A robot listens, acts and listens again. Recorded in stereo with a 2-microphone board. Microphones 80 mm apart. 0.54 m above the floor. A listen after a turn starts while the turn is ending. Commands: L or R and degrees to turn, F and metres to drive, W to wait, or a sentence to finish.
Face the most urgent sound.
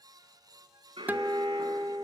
R90
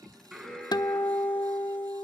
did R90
Facing the alarm, over 4 m away.